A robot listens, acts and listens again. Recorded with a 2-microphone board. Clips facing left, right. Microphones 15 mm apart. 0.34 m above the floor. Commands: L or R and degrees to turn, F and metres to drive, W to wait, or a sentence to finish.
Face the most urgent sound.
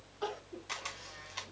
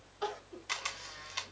R15
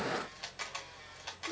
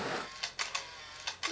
Facing the crying.